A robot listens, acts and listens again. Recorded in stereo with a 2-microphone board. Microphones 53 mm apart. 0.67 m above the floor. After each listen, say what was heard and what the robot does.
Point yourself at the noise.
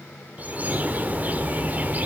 The bird: about 30° right or 150° right. Turn 30° right.
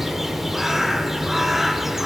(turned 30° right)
Facing the bird.